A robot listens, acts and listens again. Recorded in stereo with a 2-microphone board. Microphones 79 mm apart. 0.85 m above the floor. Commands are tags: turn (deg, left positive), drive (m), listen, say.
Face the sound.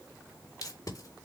<turn deg="45"/>
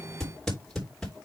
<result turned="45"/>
<say>Found it: tape being pulled, straight ahead.</say>